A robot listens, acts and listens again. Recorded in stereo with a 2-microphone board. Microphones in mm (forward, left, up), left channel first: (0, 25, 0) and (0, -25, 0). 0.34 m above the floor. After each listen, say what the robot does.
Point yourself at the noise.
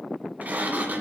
Turn 35° right.
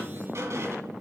Turn 110° right.
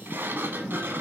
Turn 50° right.
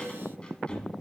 Turn 20° left.
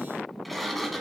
Facing the sliding door, 1 to 2 m away.